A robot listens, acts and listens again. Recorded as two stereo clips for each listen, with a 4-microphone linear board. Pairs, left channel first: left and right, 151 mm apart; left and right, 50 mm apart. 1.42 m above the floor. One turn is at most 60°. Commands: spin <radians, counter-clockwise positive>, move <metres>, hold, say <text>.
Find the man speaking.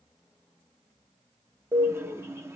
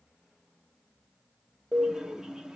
hold
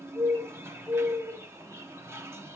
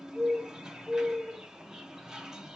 hold
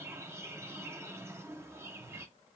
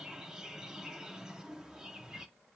say I can't make out a man speaking to turn to.